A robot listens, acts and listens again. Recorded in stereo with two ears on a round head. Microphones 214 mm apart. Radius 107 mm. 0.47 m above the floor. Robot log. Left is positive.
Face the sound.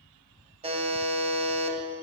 note: The buzzer: about 25° right or 155° right.
cmd yaw -25
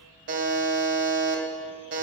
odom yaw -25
note: So it is at 125° right.
cmd yaw -125
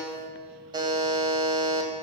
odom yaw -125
note: The buzzer is now 20° right.
cmd yaw -20
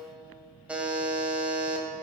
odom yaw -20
end: Found it: a buzzer, straight ahead, 2 to 4 m away.